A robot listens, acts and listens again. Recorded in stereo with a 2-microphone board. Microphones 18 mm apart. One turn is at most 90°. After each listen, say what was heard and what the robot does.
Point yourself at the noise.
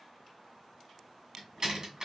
The door slam: about 35° right or 145° right. Turn 35° right.
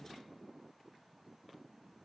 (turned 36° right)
Keep listening.
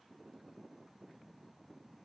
I heard a door slam, but can't make it out now. It was about 5° left or 110° right.